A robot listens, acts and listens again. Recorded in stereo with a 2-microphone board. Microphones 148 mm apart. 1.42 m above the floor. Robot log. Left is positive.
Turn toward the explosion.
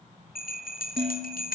cmd idle
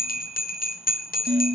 cmd idle
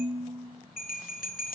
end: I can't make out an explosion to turn to.